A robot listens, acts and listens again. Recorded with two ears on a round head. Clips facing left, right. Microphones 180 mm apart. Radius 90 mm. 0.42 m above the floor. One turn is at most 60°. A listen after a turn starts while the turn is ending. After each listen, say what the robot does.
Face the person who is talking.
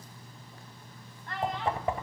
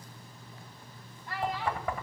Turn 30° right.
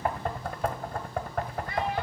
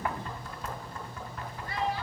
Keep listening.
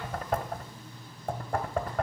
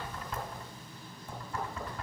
Keep listening.
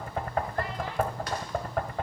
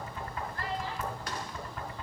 I heard a child speaking, but can't make it out now. It was about 25° left or 145° right.